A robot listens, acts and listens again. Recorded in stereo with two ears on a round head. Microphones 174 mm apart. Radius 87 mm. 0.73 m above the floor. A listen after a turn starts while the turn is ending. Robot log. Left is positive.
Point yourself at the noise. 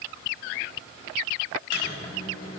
cmd idle
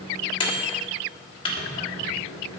note: The microwave: about 25° left or 155° left.
cmd yaw +25
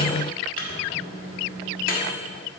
note: So it is at 125° left.
cmd yaw +125
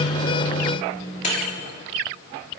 note: The microwave is now 40° left.
cmd yaw +40
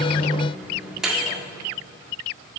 end: Found it: a microwave, straight ahead.